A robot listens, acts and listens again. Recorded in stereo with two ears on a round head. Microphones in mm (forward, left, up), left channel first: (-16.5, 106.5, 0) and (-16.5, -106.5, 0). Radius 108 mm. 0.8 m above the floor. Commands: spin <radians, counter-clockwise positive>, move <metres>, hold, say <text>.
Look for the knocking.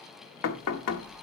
spin 1.31
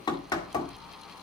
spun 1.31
spin 0.26
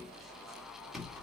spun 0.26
say Found it: knocking, straight ahead.